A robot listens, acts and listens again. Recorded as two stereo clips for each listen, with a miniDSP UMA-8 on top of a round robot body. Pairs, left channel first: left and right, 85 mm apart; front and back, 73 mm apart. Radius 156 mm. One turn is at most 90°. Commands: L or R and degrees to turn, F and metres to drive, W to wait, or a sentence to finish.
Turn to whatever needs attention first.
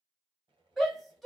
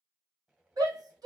L90
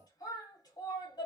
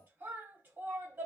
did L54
L90
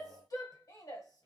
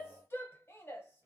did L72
L50
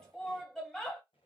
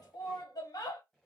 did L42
L10
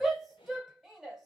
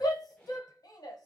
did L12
Found it: a shout, straight ahead, 1 to 2 m away.